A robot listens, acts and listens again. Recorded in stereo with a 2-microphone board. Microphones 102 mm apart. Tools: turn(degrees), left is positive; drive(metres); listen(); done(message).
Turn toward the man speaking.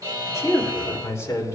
turn(degrees=30)
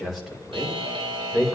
done("Facing the man speaking.")